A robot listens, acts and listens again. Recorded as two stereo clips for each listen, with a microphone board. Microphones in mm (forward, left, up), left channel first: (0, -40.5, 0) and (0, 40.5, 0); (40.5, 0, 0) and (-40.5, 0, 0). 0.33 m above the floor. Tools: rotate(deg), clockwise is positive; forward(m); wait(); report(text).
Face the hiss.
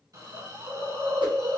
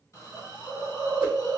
rotate(-55)
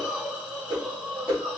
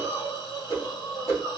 rotate(-10)
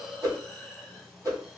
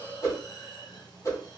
report("Found it: a hiss, straight ahead, 1 to 2 m away.")